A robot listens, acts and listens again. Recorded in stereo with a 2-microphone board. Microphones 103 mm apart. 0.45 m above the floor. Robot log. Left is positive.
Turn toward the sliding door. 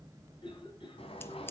note: The sliding door: about 65° left or 115° left.
cmd yaw +65
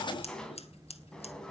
end: Found it: a sliding door, straight ahead, 2 to 4 m away.